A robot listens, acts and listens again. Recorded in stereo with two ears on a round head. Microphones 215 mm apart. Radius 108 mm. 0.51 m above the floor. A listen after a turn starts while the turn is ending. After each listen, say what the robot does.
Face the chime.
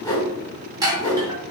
Turn 15° right.
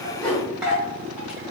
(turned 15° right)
Found it: a chime, straight ahead.